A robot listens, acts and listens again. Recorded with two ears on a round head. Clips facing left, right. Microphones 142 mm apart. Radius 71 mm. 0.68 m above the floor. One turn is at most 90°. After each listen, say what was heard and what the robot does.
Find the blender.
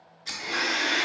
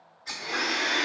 The blender: about 45° left or 135° left. Turn 45° left.
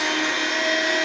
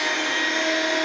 Found it: a blender, straight ahead.